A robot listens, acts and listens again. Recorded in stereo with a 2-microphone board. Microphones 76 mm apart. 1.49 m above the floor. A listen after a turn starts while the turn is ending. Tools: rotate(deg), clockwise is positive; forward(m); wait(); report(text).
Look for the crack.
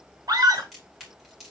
rotate(-30)
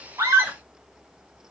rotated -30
wait()
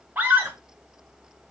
report("I heard a crack, but can't make it out now. It was about 30° right or 150° left.")